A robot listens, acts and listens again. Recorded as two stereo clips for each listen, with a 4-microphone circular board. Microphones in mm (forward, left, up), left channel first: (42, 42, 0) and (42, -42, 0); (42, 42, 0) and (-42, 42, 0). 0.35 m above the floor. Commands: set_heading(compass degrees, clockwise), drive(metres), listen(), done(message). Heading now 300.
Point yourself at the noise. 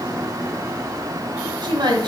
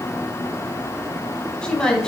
set_heading(20)
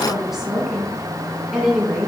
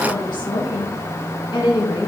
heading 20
set_heading(30)
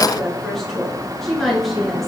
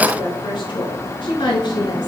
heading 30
done("Found it: a woman speaking, straight ahead, over 4 m away.")